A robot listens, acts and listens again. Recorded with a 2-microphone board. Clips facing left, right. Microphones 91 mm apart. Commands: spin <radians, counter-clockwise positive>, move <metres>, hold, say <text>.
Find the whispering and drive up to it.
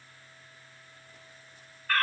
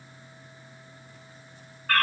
hold
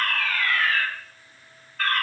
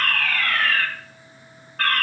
hold
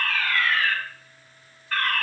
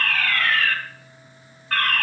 say I can't make out whispering, only a fire alarm.